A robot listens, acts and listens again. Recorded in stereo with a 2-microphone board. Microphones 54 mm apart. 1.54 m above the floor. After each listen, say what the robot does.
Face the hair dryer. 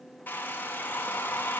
Turn 30° left.
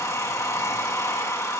Turn 115° left.
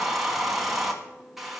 Found it: a hair dryer, straight ahead.